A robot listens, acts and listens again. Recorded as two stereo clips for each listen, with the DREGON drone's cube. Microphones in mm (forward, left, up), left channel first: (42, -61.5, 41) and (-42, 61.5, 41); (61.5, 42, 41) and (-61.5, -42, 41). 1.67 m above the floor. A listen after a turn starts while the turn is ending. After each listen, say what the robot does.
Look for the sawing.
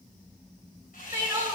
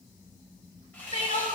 Turn 45° right.
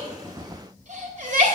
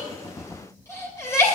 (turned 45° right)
Keep listening.
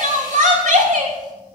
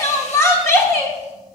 Keep listening.
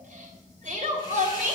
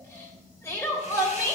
I heard sawing from this way, but can't make it out now.